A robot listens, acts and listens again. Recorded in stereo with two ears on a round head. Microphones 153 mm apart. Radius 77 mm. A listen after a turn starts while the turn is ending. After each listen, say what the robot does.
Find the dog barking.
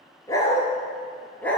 Turn 30° left.
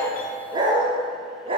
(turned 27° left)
Turn 30° right.
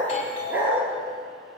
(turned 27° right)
Turn 10° right.
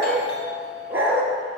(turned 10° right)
Turn 15° right.
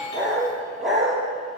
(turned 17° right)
Found it: a dog barking, straight ahead, over 4 m away.